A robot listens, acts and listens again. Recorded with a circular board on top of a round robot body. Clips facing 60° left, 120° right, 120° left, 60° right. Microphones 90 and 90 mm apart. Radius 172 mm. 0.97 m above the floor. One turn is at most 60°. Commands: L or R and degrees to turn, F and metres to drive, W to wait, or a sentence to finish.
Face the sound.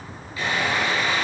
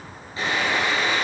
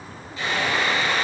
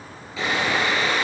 R55
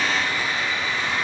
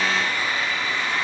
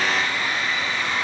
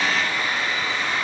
R10
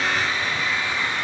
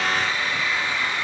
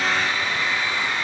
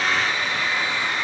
Found it: sawing, straight ahead, over 4 m away.